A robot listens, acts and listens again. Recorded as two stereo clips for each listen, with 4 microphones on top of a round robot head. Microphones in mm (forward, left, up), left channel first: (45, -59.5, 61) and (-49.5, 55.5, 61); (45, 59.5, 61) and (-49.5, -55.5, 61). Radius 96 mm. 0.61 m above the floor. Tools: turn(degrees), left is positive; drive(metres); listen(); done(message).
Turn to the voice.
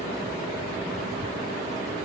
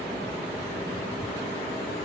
listen()
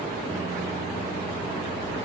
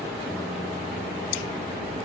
listen()
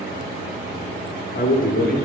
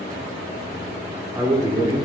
turn(degrees=-65)
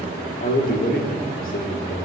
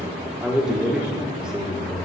turn(degrees=-45)
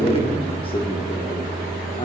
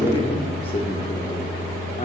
done("Facing the man speaking, 1 to 2 m away.")